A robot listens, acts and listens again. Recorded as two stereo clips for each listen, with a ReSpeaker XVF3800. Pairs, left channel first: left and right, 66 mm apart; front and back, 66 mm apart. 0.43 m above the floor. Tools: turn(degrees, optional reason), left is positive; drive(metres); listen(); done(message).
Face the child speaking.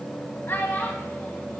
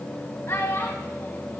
turn(degrees=40, reason="The child speaking: 40° left.")
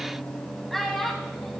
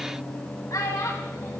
done("Found it: a child speaking, straight ahead, 2 to 4 m away.")